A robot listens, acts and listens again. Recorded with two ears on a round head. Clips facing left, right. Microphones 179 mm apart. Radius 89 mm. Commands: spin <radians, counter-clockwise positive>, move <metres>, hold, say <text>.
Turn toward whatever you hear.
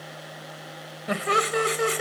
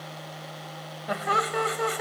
spin 0.61
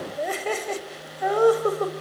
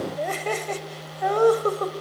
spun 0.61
say Facing the laughter.